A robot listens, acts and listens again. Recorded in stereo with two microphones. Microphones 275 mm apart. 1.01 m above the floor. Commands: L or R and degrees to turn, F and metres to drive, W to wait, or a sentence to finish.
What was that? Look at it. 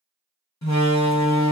L90
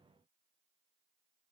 I heard a door slam from this way, but can't make it out now.